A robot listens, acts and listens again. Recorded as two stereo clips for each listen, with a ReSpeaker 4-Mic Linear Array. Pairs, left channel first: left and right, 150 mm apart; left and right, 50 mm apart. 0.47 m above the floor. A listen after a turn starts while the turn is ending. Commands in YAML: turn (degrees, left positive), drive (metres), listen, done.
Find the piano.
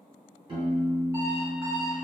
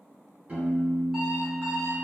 turn: -35
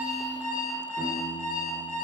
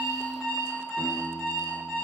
turn: -105
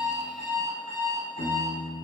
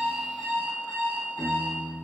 turn: 20
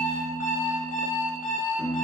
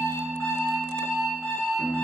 done: "Found it: a piano, straight ahead."